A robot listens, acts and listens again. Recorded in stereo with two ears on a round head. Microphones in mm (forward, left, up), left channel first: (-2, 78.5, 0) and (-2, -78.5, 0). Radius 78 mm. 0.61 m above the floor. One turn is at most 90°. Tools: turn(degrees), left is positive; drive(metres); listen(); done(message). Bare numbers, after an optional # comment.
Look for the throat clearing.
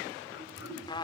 # The throat clearing: about 65° left or 115° left.
turn(65)
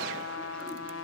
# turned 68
listen()
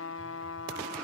listen()
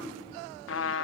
done("I heard throat clearing, but can't make it out now. It was about straight ahead or 45° left.")